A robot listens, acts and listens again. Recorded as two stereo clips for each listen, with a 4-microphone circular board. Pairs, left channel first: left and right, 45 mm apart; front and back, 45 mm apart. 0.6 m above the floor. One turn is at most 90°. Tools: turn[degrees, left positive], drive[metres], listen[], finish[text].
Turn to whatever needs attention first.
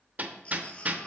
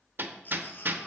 Thought: The baby crying: 30° left.
Action: turn[30]
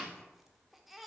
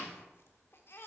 Action: finish[Found it: a baby crying, straight ahead, 1 to 2 m away.]